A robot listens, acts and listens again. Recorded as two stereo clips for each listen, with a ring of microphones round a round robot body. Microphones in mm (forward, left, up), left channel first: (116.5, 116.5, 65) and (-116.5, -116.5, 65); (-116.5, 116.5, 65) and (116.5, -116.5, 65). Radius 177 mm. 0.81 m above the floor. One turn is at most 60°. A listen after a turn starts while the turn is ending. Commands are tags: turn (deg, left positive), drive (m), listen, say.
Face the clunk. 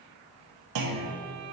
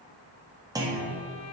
<turn deg="-60"/>
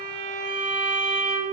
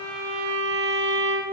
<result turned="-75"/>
<turn deg="-50"/>
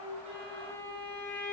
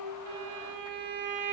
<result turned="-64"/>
<turn deg="15"/>
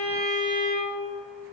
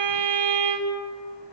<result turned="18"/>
<say>I heard a clunk from this way, but can't make it out now.</say>